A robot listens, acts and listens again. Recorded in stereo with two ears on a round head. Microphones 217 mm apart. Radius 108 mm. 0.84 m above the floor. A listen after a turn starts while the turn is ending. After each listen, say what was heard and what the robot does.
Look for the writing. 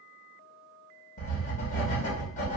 The writing: about 30° left or 150° left. Turn 30° left.
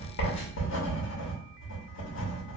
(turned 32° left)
So it is at 110° left. Turn 110° left.
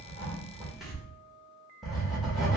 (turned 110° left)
Found it: writing, straight ahead, 1 to 2 m away.